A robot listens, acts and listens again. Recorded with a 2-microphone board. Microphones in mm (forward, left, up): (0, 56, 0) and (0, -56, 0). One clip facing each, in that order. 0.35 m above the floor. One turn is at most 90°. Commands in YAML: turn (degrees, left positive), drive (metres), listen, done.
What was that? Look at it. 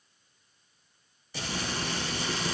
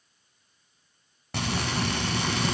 turn: -70
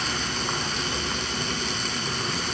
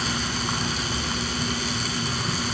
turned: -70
done: "Found it: frying, straight ahead, 1 to 2 m away."